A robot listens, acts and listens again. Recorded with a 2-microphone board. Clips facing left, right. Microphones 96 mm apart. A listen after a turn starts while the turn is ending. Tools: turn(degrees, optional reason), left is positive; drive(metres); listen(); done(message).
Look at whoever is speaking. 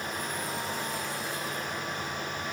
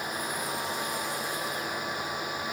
listen()
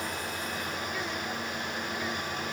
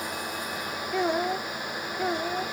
turn(degrees=-65, reason="The child speaking: about 65° right or 115° right.")
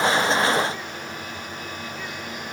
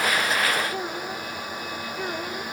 listen()
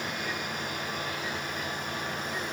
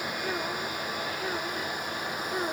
listen()
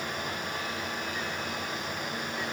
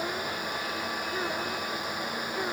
done("I heard a child speaking, but can't make it out now. It was about straight ahead or 50° right.")